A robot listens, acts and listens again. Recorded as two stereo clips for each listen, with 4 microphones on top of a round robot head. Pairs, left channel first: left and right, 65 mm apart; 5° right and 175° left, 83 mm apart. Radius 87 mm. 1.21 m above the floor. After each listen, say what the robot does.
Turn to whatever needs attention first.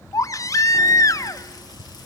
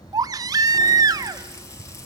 Turn 130° left.
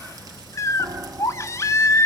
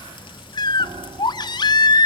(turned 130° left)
Turn 35° left.
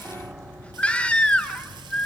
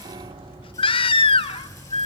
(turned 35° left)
Turn 15° left.
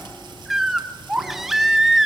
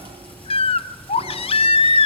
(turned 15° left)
Facing the baby crying, under 1 m away.